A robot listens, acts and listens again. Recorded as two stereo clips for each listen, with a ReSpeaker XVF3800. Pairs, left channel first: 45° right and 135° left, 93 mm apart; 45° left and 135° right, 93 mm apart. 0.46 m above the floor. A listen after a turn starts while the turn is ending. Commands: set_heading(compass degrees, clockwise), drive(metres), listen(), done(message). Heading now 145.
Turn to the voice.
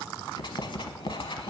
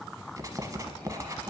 listen()
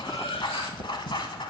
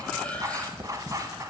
listen()
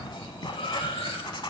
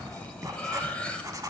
done("I can't make out anyone speaking to turn to.")